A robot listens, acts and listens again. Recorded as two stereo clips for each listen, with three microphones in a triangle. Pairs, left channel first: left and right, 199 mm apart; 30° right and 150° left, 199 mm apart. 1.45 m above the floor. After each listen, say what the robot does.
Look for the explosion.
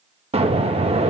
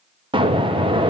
Turn 145° right.
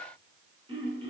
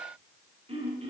Facing where the explosion came from. I can't hear it now.